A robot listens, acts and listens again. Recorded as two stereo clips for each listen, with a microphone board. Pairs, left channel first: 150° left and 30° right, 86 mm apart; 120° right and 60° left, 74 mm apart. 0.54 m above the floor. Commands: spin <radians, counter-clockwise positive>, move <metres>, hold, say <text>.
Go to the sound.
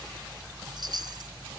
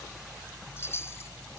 spin -1.13
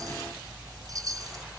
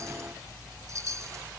spin 0.26
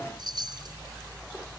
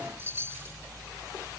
move 1.0
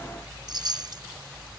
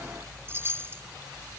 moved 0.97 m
move 1.0
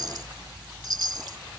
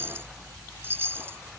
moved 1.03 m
move 1.0
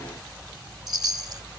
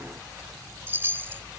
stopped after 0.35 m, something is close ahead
say Arrived at the chime, straight ahead.